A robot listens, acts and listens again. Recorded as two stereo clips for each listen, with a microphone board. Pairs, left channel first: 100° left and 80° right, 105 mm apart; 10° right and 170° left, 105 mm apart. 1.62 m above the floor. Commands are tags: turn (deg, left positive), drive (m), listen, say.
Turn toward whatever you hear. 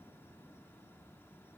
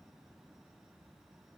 <listen/>
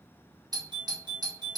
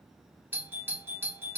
<turn deg="-120"/>
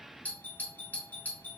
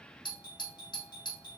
<turn deg="30"/>
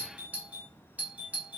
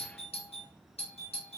<say>Found it: a doorbell, straight ahead, under 1 m away.</say>